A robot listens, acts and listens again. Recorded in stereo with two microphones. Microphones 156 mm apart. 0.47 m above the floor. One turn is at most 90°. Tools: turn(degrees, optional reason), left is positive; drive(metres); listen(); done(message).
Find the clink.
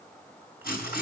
listen()
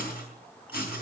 listen()
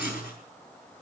done("I can't make out a clink, only writing.")